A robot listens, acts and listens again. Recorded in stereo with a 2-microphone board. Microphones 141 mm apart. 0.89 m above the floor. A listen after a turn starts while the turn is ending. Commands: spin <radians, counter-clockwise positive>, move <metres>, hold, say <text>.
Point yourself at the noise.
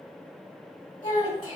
spin 1.05
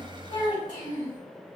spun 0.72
spin 1.31
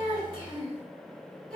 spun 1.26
say Facing the child speaking.